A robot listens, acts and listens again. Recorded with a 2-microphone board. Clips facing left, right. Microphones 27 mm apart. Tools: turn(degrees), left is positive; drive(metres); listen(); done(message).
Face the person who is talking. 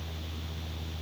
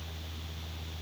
listen()
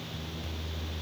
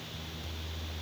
listen()
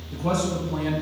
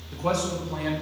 turn(degrees=-40)
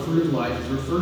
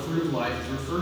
done("Found it: a man speaking, straight ahead.")